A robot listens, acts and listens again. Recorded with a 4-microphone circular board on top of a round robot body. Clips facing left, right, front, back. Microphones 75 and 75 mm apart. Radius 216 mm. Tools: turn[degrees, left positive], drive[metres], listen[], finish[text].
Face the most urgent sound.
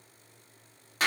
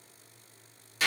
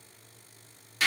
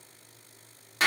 Action: listen[]
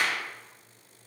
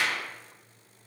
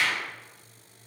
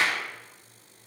Action: listen[]
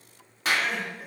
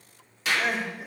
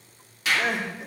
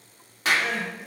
Thought: The crying: 20° right.
Action: turn[-20]
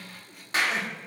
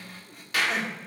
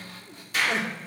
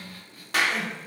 Action: finish[Found it: crying, straight ahead, 1 to 2 m away.]